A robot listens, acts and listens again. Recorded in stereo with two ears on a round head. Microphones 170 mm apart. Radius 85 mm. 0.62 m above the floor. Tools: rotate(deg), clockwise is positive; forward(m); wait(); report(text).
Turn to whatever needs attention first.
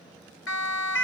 rotate(-75)
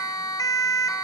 rotate(-20)
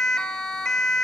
report("Facing the siren.")